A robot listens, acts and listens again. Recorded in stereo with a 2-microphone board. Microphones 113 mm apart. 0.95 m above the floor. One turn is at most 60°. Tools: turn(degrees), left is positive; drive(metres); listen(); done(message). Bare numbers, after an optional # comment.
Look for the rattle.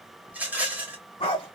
turn(-30)
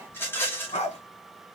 # So it is at 20° left.
turn(20)
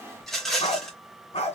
done("Facing the rattle, 1 to 2 m away.")